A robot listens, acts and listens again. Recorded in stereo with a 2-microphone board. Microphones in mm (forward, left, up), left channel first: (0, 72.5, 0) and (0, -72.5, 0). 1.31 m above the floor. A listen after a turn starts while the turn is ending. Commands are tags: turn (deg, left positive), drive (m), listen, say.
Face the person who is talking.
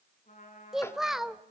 <turn deg="30"/>
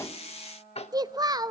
<turn deg="-30"/>
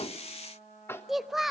<say>Found it: a child speaking, straight ahead, under 1 m away.</say>